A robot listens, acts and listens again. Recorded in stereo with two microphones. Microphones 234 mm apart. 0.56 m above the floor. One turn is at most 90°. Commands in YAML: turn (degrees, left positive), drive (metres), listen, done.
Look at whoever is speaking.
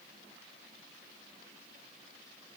listen: true
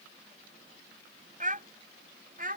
turn: -35
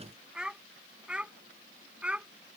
done: "Facing the child speaking."